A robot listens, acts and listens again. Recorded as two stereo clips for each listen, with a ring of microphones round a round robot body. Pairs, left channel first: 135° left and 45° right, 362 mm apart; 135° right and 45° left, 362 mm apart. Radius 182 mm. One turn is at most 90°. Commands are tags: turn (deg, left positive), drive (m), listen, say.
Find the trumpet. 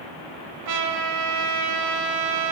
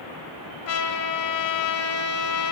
<turn deg="-85"/>
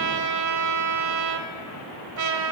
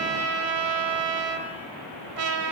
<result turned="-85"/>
<say>Found it: a trumpet, straight ahead, 1 to 2 m away.</say>